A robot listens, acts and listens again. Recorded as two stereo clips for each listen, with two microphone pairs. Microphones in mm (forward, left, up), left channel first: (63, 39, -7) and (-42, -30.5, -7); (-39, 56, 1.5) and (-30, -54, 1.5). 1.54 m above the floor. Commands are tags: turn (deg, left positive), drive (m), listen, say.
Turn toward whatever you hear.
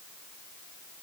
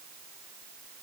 <listen/>
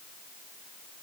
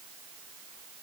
<listen/>
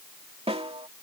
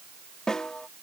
<turn deg="180"/>
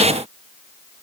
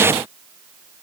<listen/>
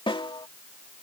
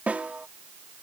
<turn deg="-10"/>
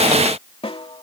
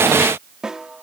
<say>Found it: a snare drum, straight ahead.</say>